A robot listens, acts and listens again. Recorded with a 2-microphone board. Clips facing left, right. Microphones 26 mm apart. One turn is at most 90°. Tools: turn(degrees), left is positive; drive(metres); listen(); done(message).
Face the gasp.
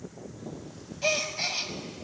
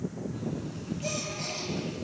turn(degrees=45)
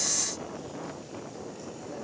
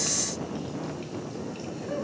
listen()
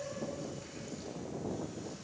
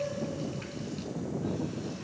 done("I heard a gasp, but can't make it out now. It was about straight ahead or 90° left.")